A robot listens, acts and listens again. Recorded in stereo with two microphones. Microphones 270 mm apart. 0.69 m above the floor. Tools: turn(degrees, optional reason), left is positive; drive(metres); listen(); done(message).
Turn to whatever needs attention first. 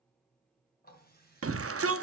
turn(degrees=-55, reason="The shout: about 55° right or 125° right.")
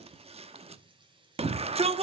turn(degrees=-25, reason="So it is at 25° right.")
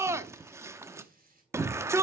turn(degrees=-10, reason="The shout is now 10° right.")
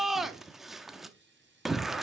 done("Found it: a shout, straight ahead.")